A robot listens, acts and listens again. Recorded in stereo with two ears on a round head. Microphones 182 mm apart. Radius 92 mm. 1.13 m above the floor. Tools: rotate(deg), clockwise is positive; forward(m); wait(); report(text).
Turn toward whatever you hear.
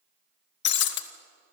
rotate(-60)
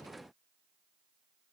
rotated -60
wait()
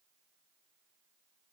report("I heard breaking glass, but can't make it out now. It was about straight ahead or 60° left.")